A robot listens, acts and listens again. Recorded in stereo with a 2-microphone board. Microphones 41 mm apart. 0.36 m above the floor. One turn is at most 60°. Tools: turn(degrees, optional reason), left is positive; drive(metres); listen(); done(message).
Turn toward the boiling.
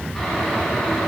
turn(degrees=30)
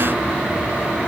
turn(degrees=-25, reason="So it is at 25° right.")
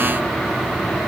done("Found it: boiling, straight ahead, 2 to 4 m away.")